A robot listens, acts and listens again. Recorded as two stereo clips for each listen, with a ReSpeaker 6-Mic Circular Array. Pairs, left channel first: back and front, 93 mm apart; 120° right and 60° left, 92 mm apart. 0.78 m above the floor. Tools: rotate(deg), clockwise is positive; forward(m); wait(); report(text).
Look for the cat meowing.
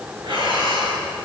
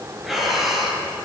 wait()
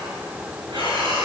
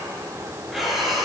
wait()
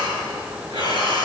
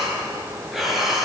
report("I can't make out a cat meowing, only breathing.")